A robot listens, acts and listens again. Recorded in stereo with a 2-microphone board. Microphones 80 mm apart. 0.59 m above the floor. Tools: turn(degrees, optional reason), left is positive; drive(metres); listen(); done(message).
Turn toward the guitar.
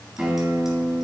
turn(degrees=-30)
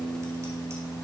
turn(degrees=20, reason="So it is at 20° left.")
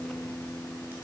done("Found it: a guitar, straight ahead.")